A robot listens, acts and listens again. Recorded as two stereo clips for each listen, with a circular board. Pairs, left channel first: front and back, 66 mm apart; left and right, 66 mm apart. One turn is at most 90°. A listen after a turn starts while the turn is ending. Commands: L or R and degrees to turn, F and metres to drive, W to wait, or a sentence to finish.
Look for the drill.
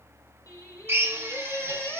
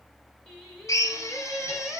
L90
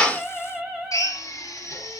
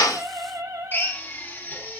L30
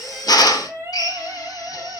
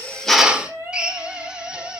R15
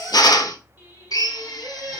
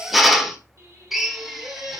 Found it: a drill, straight ahead.